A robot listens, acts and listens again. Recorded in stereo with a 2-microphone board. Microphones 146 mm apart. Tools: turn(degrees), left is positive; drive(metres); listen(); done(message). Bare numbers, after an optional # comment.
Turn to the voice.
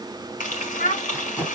# The child speaking: about 60° left or 120° left.
turn(60)
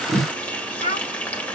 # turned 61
# So it is at 55° left.
turn(55)
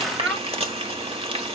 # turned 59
done("Facing the child speaking.")